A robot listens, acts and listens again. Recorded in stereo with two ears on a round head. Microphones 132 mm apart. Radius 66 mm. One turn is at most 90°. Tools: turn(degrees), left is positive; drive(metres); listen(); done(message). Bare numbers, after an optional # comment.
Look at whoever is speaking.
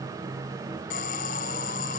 listen()
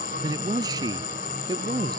# The man speaking: about 25° right or 155° right.
turn(-25)
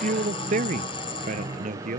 # So it is at 125° right.
turn(-90)
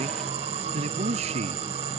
# The man speaking is now 45° right.
turn(-45)
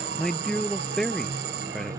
done("Found it: a man speaking, straight ahead.")